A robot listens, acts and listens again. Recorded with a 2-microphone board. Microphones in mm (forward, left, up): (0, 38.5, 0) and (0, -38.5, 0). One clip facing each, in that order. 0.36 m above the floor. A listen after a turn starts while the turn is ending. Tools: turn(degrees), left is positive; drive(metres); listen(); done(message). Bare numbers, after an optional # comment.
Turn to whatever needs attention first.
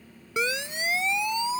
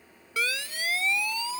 # The siren: about 20° left or 160° left.
turn(20)
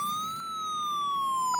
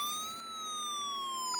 # So it is at 140° left.
turn(140)
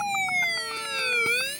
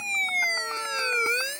# The siren is now 20° right.
turn(-20)
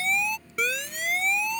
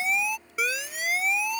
done("Facing the siren.")